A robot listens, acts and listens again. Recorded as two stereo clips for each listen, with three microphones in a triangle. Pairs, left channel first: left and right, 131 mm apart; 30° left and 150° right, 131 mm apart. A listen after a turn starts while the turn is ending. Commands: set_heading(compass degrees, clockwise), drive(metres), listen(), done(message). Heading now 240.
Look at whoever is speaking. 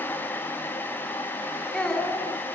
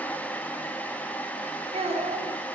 set_heading(65)
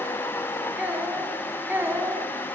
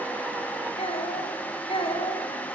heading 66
set_heading(86)
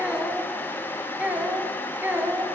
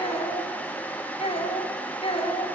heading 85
set_heading(100)
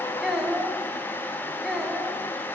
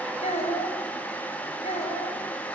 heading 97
done("Facing the child speaking, 2 to 4 m away.")